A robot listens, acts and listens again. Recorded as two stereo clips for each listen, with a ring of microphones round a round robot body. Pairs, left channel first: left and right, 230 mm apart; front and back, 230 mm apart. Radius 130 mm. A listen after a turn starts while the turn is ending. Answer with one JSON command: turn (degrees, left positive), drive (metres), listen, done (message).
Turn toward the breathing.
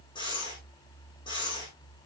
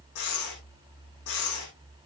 {"turn": 15}
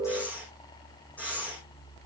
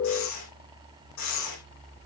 {"done": "Facing the breathing."}